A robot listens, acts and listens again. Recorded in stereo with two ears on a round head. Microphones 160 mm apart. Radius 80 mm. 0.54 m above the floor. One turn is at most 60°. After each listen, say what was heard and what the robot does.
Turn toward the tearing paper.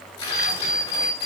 The tearing paper: about 30° left or 150° left. Turn 30° left.
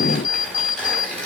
Facing the tearing paper, over 4 m away.